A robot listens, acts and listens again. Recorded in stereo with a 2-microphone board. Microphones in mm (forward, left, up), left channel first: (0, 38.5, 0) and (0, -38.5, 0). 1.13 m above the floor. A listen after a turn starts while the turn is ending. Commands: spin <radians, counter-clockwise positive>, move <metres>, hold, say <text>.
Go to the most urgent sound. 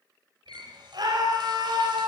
spin -1.13
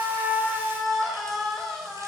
move 1.0
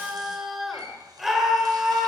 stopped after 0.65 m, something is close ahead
say Blocked. The scream is further on, straight ahead.